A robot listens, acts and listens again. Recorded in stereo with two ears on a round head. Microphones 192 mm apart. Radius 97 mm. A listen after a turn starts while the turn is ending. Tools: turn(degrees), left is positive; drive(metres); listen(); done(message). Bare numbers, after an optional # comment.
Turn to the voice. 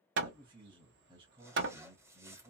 # The man speaking: about 25° right or 155° right.
turn(-25)
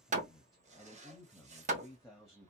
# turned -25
done("Found it: a man speaking, straight ahead, under 1 m away.")